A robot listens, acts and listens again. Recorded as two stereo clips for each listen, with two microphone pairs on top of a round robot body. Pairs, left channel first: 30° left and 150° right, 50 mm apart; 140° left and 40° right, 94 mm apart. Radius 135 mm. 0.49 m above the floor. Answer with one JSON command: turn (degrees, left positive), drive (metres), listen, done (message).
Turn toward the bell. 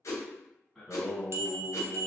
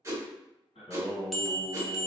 {"turn": -135}
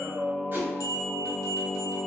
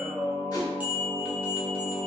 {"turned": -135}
{"turn": 30}
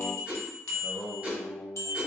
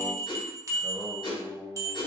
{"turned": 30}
{"turn": 15}
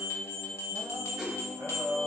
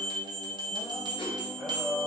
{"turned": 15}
{"done": "Found it: a bell, straight ahead, under 1 m away."}